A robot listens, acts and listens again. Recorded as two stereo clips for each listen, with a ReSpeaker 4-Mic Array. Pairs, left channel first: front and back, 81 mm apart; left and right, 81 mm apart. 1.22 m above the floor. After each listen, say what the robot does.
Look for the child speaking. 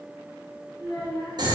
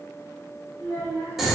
Turn 35° left.
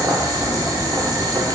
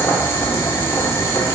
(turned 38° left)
Keep listening.
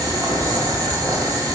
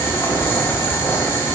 Keep listening.
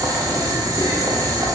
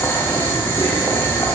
Facing where the child speaking came from. I can't hear it now.